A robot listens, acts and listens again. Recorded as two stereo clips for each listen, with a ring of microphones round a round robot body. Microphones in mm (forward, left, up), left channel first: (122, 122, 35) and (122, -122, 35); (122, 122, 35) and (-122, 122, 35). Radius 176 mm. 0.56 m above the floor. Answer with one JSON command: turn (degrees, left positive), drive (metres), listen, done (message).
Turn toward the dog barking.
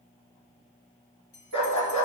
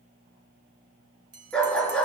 {"turn": 85}
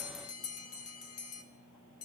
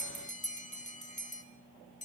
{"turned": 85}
{"listen": true}
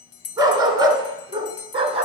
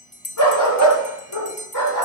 {"turn": -25}
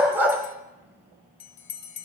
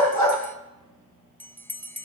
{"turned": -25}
{"turn": -10}
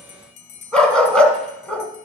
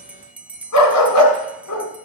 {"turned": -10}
{"done": "Found it: a dog barking, straight ahead."}